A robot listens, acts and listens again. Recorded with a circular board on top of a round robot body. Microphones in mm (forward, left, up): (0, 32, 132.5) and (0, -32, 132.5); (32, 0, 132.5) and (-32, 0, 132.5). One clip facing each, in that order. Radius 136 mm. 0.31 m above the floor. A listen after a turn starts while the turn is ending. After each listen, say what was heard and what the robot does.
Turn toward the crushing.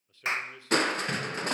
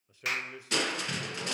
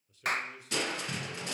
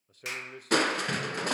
The crushing: 140° left. Turn 140° left.
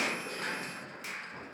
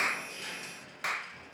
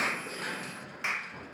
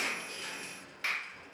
The crushing is now 40° left. Turn 40° left.
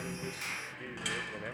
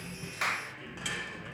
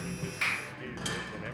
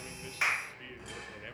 Facing the crushing, 1 to 2 m away.